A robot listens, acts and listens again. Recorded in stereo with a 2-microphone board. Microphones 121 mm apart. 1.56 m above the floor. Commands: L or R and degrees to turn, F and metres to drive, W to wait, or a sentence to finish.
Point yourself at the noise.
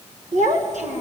R90
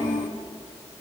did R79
R10
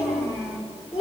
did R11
Found it: a child speaking, straight ahead, over 4 m away.